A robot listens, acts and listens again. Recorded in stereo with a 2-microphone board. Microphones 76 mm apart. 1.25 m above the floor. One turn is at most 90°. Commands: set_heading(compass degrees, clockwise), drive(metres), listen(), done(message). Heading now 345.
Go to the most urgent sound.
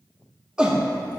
set_heading(15)
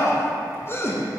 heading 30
set_heading(355)
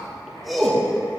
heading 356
drive(1.0)
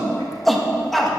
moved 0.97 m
drive(1.0)
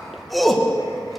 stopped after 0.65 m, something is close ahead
done("Arrived at the shout, straight ahead.")